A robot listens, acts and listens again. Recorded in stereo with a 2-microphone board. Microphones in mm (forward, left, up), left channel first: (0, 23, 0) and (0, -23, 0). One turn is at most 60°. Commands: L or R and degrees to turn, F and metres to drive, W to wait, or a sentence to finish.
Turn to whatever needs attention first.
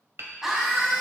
R30
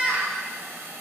R60
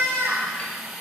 R60
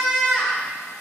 Found it: a scream, straight ahead, 1 to 2 m away.